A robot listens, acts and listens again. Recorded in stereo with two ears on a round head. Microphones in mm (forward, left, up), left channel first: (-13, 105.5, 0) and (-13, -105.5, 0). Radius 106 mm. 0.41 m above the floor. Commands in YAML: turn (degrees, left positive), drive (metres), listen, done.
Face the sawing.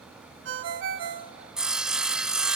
turn: -30
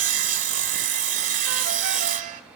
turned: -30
turn: -145
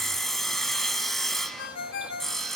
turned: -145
done: "Found it: sawing, straight ahead, 1 to 2 m away."